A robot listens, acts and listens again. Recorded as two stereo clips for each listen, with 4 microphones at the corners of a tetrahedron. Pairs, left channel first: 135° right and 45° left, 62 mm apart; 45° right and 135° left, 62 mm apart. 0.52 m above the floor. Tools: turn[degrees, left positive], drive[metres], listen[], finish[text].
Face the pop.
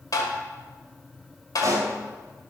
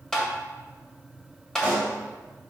Thought: The pop: 70° left.
Action: turn[70]
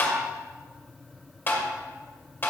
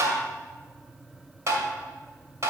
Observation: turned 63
Action: finish[Facing where the pop came from. I can't hear it now.]